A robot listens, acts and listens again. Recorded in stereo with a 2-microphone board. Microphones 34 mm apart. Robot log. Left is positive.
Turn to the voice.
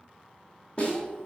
note: The child speaking: about 35° left or 145° left.
cmd yaw +35
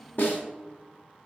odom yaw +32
end: Found it: a child speaking, straight ahead.